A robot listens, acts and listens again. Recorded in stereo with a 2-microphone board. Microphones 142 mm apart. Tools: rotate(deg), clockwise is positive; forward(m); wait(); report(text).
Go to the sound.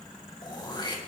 rotate(-30)
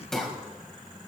forward(1.0)
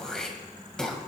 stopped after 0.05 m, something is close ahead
report("Blocked. The throat clearing is further on, straight ahead.")